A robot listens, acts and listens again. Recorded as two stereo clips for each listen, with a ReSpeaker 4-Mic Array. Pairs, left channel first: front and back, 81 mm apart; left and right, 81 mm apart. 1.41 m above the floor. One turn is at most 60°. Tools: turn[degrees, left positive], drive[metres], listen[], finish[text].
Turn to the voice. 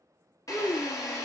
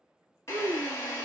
Thought: The child speaking: 45° right.
Action: turn[-45]
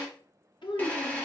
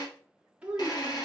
Thought: The child speaking is now 15° right.
Action: turn[-15]
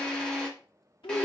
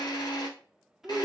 Action: finish[Found it: a child speaking, straight ahead.]